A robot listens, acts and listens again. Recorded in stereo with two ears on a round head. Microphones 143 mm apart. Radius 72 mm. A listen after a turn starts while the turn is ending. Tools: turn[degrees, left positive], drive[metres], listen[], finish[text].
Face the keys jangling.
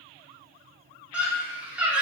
Action: listen[]
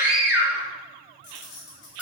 Thought: The keys jangling: about 55° left or 125° left.
Action: turn[55]
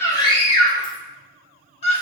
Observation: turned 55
Action: listen[]
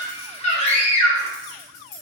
Thought: So it is at 50° left.
Action: turn[50]
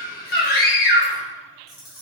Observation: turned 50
Action: finish[Facing the keys jangling.]